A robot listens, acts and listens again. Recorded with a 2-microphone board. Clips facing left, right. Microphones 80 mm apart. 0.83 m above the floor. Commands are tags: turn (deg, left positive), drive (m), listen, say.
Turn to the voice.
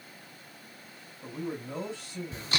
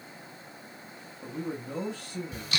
<turn deg="-60"/>
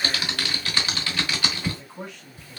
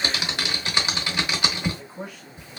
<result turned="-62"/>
<say>Found it: a man speaking, straight ahead.</say>